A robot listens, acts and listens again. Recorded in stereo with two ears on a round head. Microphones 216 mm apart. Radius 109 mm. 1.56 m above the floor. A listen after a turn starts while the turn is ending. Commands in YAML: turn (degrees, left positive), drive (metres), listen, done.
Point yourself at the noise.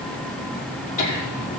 turn: 30
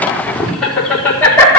turn: 10
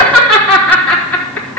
done: "Facing the laughter, 2 to 4 m away."